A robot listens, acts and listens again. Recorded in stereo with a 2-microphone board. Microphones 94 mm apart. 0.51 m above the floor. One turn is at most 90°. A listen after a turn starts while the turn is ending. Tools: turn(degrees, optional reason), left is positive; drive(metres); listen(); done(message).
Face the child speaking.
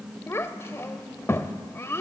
turn(degrees=25, reason="The child speaking: about 25° left or 155° left.")
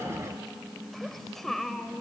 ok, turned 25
done("Facing the child speaking, 1 to 2 m away.")